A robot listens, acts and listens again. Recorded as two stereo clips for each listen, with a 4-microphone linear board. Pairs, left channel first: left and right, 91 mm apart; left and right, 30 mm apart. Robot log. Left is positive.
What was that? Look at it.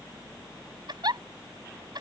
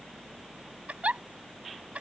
note: The giggle: about 55° right or 125° right.
cmd yaw -55
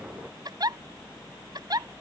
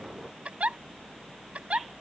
note: So it is at 60° right.
cmd yaw -60
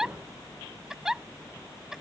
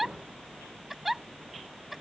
end: Facing the giggle.